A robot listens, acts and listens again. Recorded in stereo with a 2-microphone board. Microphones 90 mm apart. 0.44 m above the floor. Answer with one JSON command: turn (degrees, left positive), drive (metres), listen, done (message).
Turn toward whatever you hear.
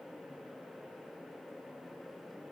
{"listen": true}
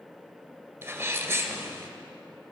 {"turn": -25}
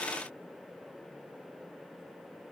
{"listen": true}
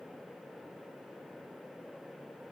{"done": "I heard a sneeze, but can't make it out now. It was about straight ahead or 130° right."}